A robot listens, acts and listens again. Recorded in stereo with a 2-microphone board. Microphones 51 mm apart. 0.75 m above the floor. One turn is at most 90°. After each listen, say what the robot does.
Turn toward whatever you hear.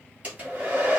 Turn 30° right.
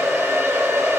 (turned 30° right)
Turn 90° right.
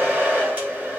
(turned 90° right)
Turn 35° right.
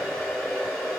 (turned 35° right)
Found it: a hair dryer, straight ahead, 1 to 2 m away.